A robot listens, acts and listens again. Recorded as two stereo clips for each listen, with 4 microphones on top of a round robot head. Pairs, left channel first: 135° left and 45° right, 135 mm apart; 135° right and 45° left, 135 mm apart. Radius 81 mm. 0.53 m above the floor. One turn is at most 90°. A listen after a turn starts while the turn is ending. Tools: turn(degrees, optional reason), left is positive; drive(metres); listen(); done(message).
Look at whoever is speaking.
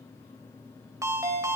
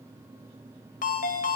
listen()
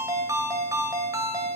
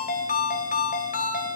listen()
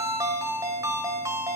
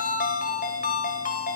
done("I can't make out anyone speaking, only a ringtone.")